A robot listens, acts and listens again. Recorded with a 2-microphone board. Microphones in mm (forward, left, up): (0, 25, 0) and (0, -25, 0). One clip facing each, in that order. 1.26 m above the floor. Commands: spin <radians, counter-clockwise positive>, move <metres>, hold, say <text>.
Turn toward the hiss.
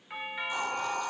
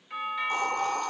spin -0.96
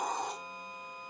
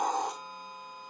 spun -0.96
spin -1.31
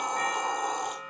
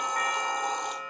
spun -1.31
spin 0.35
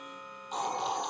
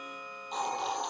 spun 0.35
say Facing the hiss, over 4 m away.